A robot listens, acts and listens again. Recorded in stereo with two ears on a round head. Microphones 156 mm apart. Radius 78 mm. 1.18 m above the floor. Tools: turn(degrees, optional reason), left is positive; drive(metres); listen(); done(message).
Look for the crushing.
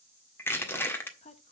turn(degrees=30)
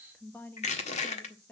turn(degrees=135, reason="So it is at 135° left.")
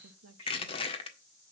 turn(degrees=35, reason="The crushing is now 35° left.")
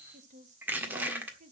turn(degrees=-10, reason="The crushing is now 10° right.")
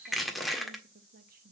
done("Found it: crushing, straight ahead, 1 to 2 m away.")